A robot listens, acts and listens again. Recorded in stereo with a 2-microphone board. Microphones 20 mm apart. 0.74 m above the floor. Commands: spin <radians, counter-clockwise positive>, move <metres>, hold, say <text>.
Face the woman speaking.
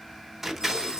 hold
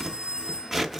hold
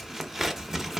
say I can't make out a woman speaking to turn to.